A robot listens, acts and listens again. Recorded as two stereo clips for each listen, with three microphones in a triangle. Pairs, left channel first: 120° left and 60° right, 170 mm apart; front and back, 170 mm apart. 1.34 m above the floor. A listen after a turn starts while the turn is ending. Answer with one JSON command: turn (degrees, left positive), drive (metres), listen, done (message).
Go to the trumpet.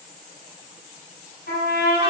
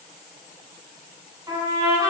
{"turn": 110}
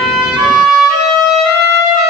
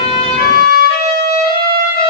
{"turn": 10}
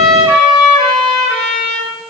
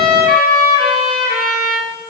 {"drive": 1.0}
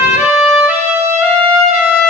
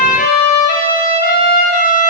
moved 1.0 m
{"turn": 15}
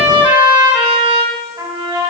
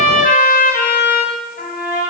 {"drive": 1.0}
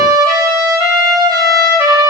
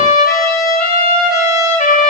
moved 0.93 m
{"drive": 1.0}
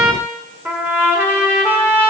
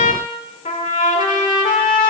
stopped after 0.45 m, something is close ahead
{"turn": 15}
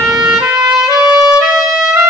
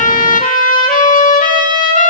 {"done": "I am next to the trumpet."}